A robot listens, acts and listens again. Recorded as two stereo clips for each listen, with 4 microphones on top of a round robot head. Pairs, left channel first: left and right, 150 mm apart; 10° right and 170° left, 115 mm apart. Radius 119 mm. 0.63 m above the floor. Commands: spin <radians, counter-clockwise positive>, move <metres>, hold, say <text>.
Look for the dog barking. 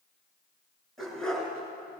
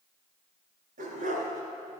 spin 3.05
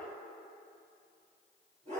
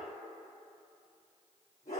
spin -0.70
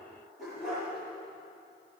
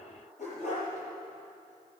say Found it: a dog barking, straight ahead.